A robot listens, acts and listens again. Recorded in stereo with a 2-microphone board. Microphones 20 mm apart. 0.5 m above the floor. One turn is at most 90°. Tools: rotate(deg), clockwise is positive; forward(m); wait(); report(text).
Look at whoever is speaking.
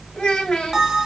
rotate(-60)
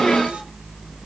wait()
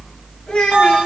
rotate(-55)
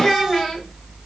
report("Facing the child speaking.")